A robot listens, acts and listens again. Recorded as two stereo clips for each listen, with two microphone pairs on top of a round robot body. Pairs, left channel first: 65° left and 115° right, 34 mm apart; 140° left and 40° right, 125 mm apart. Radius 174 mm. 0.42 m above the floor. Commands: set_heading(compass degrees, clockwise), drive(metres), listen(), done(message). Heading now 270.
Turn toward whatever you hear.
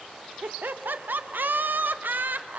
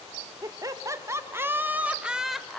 set_heading(45)
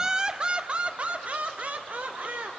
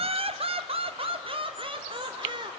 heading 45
set_heading(130)
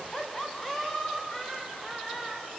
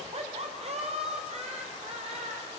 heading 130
set_heading(140)
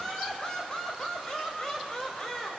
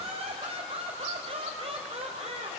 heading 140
done("Found it: laughter, straight ahead.")